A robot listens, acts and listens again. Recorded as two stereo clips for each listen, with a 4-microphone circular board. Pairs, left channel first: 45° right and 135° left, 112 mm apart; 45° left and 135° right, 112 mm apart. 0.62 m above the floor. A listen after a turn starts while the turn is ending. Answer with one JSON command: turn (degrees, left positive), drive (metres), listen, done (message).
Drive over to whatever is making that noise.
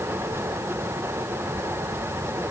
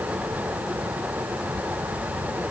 {"listen": true}
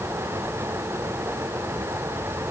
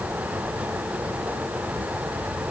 {"listen": true}
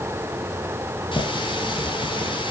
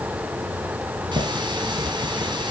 {"turn": -90}
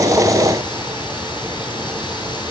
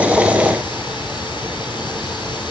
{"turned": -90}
{"listen": true}
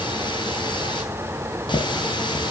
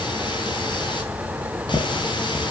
{"drive": 1.0}
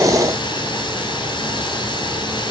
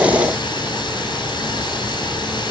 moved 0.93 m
{"drive": 1.0}
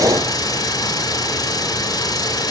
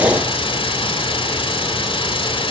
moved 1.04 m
{"turn": 10}
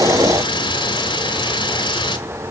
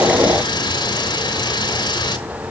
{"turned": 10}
{"drive": 1.0}
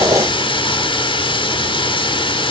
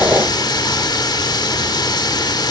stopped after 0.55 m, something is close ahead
{"done": "I am next to the running tap."}